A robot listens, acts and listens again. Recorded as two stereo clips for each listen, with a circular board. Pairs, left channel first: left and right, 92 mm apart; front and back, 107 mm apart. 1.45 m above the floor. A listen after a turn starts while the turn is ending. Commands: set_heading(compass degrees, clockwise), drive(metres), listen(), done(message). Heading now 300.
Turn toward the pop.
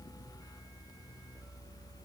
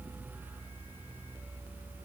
listen()
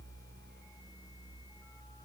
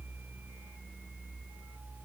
listen()
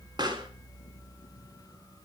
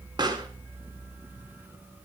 set_heading(70)
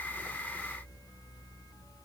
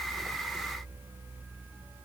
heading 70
done("I heard a pop from this way, but can't make it out now.")